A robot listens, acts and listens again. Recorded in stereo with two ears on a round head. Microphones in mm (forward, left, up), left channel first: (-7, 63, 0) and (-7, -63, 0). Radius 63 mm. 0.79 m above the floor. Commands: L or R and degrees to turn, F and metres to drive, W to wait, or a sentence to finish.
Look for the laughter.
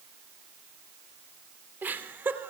R30
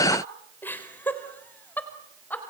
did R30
L10
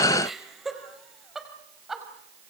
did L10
Found it: laughter, straight ahead.